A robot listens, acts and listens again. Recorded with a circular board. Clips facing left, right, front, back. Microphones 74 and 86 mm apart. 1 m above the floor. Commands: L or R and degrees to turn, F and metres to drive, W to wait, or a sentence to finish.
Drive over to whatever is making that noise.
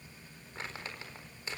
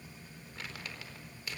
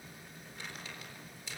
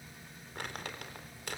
L150
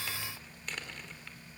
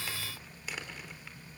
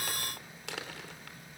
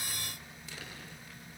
F1.0
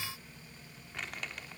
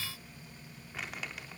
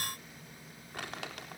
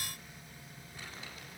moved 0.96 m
F1.0
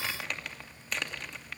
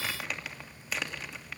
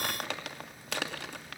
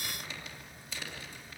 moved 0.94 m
F1.0
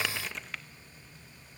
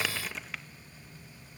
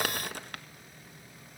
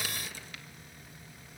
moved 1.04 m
F1.0
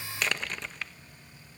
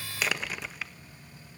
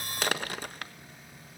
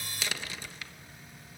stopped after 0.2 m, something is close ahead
I am next to the crumpling.